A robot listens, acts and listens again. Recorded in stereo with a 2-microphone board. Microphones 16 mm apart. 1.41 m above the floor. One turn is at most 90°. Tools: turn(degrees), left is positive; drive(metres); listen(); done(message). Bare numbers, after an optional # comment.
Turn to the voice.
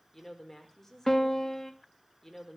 # The woman speaking: about 15° left or 165° left.
turn(15)
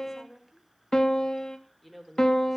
done("Found it: a woman speaking, straight ahead.")